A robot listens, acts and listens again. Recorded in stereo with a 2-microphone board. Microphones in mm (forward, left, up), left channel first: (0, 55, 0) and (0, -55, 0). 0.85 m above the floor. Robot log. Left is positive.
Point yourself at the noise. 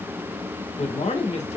cmd yaw +90
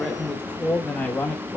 note: So it is at 20° left.
cmd yaw +20
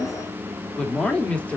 note: The man speaking is now 15° left.
cmd yaw +15
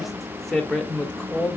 note: The man speaking is now 10° left.
cmd yaw +10
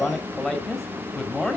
end: Found it: a man speaking, straight ahead, 1 to 2 m away.